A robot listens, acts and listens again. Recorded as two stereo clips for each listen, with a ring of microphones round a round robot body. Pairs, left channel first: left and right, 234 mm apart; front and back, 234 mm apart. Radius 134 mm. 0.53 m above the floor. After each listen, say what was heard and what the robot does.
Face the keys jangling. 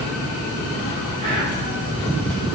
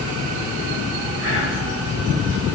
Keep listening.
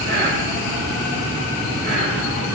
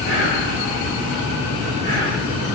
Keep listening.
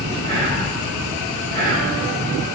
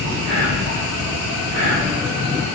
I can't make out keys jangling, only whispering.